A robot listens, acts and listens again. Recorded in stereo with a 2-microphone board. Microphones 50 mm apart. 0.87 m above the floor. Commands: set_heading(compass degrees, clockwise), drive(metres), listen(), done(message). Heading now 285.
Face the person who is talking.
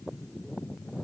listen()
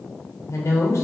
set_heading(195)
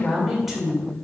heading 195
done("Facing the woman speaking.")